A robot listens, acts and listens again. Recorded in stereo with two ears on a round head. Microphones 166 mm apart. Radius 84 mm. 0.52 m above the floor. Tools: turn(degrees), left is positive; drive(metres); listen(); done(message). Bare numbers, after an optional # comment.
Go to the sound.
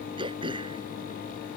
# The throat clearing: about 25° right or 155° right.
turn(-25)
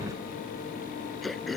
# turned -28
drive(1.0)
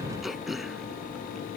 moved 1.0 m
drive(1.0)
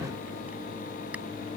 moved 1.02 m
listen()
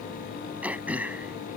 # The throat clearing is now 10° right.
turn(-10)
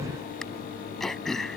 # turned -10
drive(1.0)
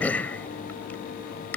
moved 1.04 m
# The throat clearing is now 10° left.
turn(10)
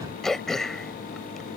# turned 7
drive(1.0)
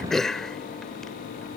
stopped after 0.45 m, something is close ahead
done("Arrived at the throat clearing, straight ahead.")